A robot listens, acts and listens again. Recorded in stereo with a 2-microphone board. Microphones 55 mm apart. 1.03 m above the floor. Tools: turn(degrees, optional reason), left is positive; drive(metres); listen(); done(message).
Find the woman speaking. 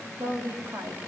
turn(degrees=-90)
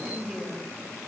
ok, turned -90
done("Facing the woman speaking.")